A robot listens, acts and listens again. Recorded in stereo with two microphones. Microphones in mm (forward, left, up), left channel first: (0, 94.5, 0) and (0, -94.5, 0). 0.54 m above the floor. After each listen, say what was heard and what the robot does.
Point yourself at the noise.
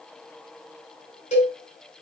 The cowbell: about 40° left or 140° left. Turn 40° left.
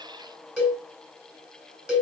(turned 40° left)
Facing the cowbell.